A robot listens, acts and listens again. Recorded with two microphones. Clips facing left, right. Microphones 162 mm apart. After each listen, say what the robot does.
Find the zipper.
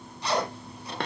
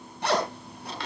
Turn 60° right.
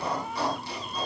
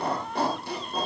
Turn 55° right.
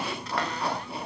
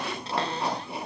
Turn 20° right.
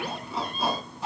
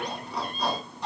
Found it: a zipper, straight ahead.